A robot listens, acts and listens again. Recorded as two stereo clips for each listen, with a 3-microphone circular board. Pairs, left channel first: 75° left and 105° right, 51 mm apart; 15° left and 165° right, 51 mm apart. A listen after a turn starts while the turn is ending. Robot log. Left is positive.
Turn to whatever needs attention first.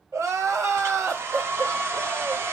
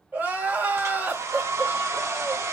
note: The crying: 105° right.
cmd yaw -105
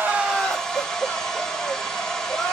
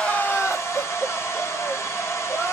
note: The crying is now 30° left.
cmd yaw +30
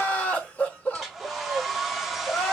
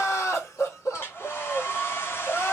note: The crying is now 15° left.
cmd yaw +15
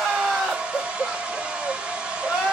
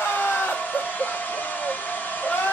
end: Found it: crying, straight ahead, 2 to 4 m away.